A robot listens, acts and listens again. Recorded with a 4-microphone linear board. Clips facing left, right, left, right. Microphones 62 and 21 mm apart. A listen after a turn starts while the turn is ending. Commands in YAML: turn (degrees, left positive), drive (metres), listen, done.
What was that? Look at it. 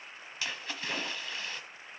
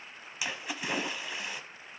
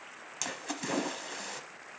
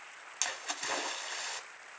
turn: -30
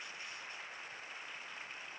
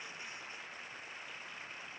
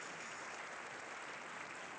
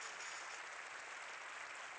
listen: true
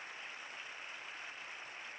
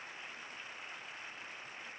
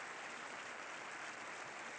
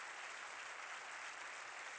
done: "I heard a splash, but can't make it out now. It was about 15° left or 135° right."